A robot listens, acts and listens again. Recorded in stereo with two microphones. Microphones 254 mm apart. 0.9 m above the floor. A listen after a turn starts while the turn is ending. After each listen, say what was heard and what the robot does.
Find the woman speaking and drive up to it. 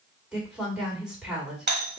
Turn 30° right.
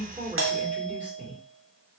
So it is at 145° right. Turn 145° right.
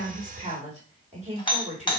The woman speaking is now 30° right. Turn 30° right.
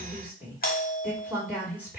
The woman speaking is now 10° right. Turn 10° right.
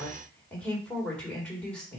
Drive 1.0 m forward.
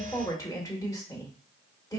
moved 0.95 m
The woman speaking is now 15° left. Turn 15° left.
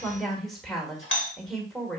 Drive 1.0 m forward.
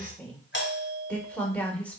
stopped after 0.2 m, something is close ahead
I am next to the woman speaking.